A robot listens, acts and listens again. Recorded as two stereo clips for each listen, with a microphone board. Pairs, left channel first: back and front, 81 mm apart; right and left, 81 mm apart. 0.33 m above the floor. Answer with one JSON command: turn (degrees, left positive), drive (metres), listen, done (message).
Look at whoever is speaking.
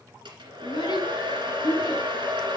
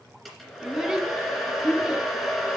{"turn": 170}
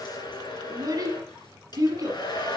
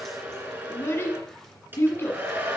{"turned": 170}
{"turn": -35}
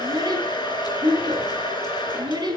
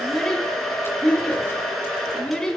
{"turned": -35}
{"turn": -10}
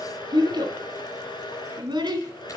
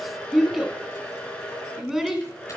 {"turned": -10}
{"done": "Found it: a child speaking, straight ahead, 1 to 2 m away."}